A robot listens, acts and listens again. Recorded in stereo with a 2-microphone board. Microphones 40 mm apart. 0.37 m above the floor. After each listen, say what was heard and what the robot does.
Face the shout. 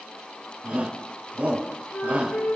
The shout: about 55° right or 125° right. Turn 55° right.
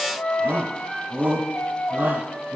So it is at 70° right. Turn 70° right.
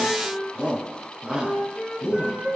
The shout is now 20° right. Turn 20° right.
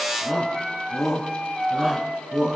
Found it: a shout, straight ahead, 2 to 4 m away.